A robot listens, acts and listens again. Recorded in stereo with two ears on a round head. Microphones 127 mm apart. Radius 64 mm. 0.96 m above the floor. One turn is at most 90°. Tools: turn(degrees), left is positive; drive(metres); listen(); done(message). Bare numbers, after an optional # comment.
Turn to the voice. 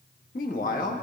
# The man speaking: about 65° left or 115° left.
turn(65)
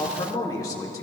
# So it is at 30° left.
turn(30)
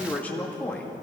# The man speaking is now 15° left.
turn(15)
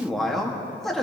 done("Found it: a man speaking, straight ahead, 1 to 2 m away.")